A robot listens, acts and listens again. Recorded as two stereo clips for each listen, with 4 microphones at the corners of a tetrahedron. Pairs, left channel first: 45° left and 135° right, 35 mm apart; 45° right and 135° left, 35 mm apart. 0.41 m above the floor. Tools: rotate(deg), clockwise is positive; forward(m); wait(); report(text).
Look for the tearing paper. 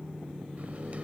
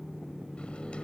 wait()
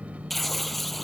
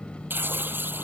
rotate(-130)
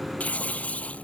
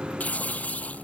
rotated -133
report("Facing the tearing paper.")